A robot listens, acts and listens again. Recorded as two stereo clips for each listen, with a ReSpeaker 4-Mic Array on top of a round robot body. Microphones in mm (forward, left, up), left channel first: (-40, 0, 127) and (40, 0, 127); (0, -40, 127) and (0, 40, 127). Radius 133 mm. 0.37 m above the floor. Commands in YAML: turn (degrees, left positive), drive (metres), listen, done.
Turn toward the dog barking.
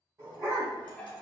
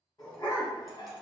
turn: -55
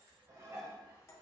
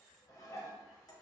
listen: true
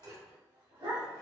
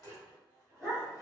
turn: -10
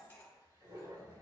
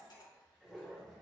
done: "Found it: a dog barking, straight ahead, 2 to 4 m away."